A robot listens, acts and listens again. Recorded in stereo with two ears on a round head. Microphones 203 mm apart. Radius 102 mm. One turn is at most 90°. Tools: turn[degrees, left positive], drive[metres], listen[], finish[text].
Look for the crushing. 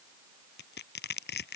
Thought: The crushing: about 55° left or 125° left.
Action: turn[55]
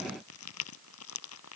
Thought: So it is at 75° left.
Action: turn[75]
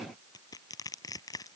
Thought: The crushing is now 15° left.
Action: turn[15]
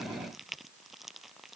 Action: finish[Facing the crushing.]